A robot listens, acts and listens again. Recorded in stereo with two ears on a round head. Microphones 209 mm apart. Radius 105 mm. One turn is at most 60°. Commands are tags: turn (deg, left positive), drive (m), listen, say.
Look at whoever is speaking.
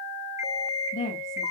<turn deg="30"/>
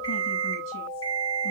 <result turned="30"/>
<listen/>
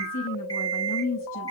<turn deg="60"/>
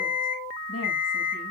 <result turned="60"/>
<turn deg="60"/>
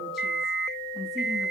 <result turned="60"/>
<listen/>
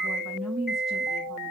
<say>Found it: a woman speaking, straight ahead.</say>